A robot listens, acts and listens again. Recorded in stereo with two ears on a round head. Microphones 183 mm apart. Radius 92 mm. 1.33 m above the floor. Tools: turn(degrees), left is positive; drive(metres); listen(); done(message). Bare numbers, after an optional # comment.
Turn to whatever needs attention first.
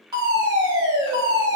# The fire alarm: about 20° right or 160° right.
turn(-20)
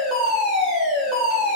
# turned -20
done("Facing the fire alarm, 2 to 4 m away.")